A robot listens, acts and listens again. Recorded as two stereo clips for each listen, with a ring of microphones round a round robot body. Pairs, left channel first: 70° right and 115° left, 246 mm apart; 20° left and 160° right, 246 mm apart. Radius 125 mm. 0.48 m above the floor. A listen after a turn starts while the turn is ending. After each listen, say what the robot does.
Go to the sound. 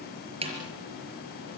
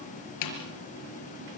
Turn 45° left.
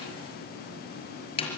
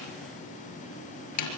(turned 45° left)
Drive 1.0 m forward.
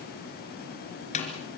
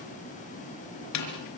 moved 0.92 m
Drive 1.0 m forward.
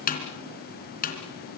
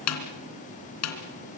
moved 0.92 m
Turn 10° right.
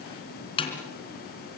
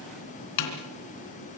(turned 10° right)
Drive 1.0 m forward.
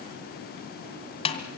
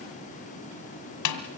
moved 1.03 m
Drive 1.0 m forward.
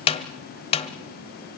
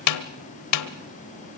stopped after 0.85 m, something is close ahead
Arrived at the snare drum, straight ahead.